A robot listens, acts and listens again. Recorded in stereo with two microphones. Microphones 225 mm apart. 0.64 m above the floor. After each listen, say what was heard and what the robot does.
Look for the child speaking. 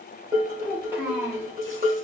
Turn 30° right.
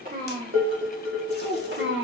So it is at 120° right. Turn 120° right.
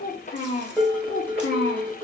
The child speaking is now 55° left. Turn 55° left.
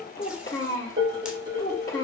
The child speaking is now 20° left. Turn 20° left.
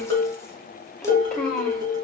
Found it: a child speaking, straight ahead.